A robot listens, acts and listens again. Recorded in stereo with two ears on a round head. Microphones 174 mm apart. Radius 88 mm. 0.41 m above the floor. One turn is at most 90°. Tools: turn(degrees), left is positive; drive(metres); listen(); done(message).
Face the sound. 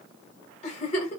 turn(degrees=35)
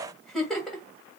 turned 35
done("Facing the giggle.")